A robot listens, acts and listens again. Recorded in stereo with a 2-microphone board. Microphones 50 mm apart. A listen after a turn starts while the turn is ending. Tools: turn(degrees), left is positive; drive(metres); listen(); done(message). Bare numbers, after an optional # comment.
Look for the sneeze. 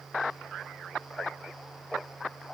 listen()
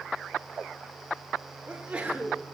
# The sneeze: about 20° right or 160° right.
turn(-20)
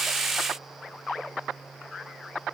listen()
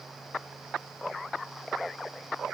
done("I heard a sneeze, but can't make it out now. It was about straight ahead or 140° right.")